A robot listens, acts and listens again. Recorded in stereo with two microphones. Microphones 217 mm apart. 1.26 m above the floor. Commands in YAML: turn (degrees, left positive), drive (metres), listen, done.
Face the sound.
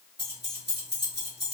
turn: -50
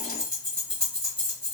done: "Facing the keys jangling, 1 to 2 m away."